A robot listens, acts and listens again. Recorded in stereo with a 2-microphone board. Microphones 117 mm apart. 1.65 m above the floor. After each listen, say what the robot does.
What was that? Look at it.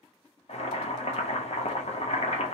Turn 65° left.
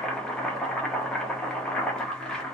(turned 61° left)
Facing the boiling, under 1 m away.